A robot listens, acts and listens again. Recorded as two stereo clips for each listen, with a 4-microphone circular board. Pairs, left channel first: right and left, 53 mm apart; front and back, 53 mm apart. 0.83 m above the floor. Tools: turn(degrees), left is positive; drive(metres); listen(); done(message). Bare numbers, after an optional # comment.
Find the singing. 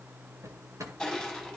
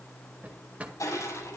listen()
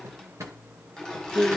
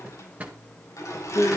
# The singing: 30° left.
turn(30)
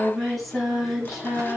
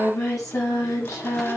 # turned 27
done("Facing the singing, over 4 m away.")